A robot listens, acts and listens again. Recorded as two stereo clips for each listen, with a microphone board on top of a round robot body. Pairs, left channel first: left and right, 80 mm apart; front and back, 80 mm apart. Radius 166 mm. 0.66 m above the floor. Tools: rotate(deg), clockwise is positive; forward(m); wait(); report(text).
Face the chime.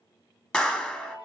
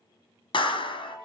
rotate(-80)
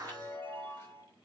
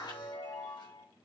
rotate(-25)
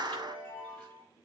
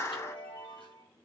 rotate(-15)
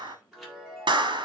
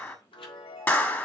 report("Facing the chime.")